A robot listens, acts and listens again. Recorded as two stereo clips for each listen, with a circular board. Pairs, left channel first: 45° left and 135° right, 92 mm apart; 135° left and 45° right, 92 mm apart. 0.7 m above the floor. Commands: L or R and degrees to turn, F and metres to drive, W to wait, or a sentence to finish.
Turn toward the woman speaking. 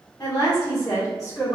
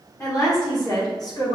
L100
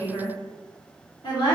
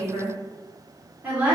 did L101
L25
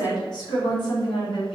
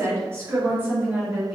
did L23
L30
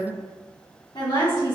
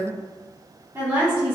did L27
L20
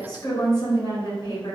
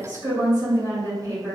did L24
Facing the woman speaking, 1 to 2 m away.